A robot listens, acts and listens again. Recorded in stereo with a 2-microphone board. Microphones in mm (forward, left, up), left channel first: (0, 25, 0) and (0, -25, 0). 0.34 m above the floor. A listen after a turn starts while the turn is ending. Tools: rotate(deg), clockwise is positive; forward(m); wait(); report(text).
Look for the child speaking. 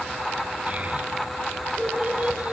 rotate(30)
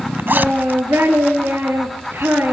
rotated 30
rotate(130)
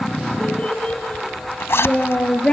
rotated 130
rotate(-25)
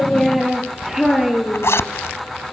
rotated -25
report("Found it: a child speaking, straight ahead.")